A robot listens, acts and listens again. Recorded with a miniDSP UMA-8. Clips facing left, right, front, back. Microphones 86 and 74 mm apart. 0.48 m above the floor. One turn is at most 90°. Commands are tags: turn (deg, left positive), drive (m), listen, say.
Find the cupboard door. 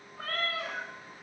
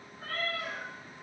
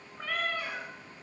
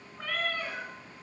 <listen/>
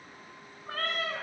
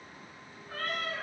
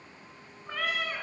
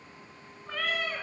<listen/>
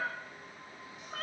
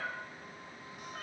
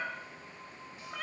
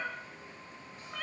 <say>I can't make out a cupboard door to turn to.</say>